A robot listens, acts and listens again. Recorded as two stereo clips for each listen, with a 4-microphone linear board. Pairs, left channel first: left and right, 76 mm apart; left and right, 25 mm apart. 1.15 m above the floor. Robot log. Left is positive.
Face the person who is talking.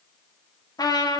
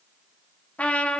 cmd idle
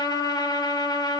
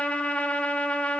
cmd idle
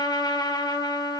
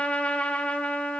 end: I can't make out anyone speaking to turn to.